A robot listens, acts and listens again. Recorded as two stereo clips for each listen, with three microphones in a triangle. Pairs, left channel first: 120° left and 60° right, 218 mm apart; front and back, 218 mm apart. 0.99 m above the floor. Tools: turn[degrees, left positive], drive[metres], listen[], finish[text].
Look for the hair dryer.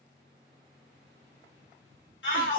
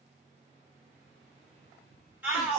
Action: listen[]
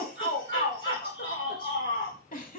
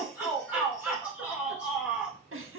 Action: listen[]
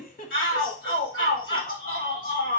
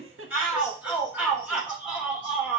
Action: finish[I can't make out a hair dryer, only a shout and a giggle.]